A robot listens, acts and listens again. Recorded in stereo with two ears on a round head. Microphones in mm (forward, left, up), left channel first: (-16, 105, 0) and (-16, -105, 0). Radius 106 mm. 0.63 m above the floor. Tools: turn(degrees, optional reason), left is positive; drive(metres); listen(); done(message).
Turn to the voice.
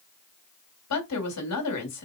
turn(degrees=70, reason="The woman speaking: about 70° left or 110° left.")
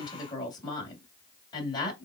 turn(degrees=20, reason="So it is at 20° left.")
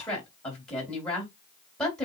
done("Facing the woman speaking.")